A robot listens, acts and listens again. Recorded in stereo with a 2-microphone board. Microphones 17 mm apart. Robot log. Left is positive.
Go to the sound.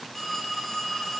cmd yaw +30
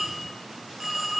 note: So it is at 20° right.
cmd yaw -20
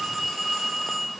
cmd fwd 1.0
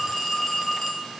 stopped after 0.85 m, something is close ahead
end: I am next to the phone ringing.